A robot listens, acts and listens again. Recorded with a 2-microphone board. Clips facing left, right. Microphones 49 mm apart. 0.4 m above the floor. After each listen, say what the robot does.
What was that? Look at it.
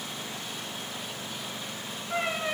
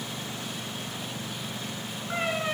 Turn 40° right.
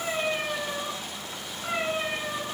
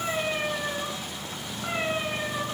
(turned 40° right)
Turn 15° right.
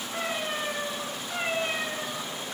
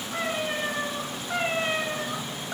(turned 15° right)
Turn 25° right.
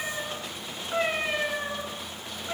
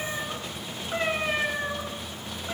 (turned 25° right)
Facing the cat meowing.